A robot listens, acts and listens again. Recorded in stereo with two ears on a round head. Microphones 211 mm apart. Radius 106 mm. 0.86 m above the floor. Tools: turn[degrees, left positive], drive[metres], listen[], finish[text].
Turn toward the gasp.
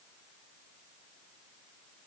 Action: listen[]
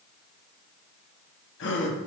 Thought: The gasp: about 50° left or 130° left.
Action: turn[50]
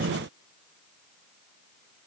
Action: listen[]
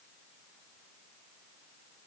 Action: finish[I heard a gasp, but can't make it out now. It was about straight ahead or 80° left.]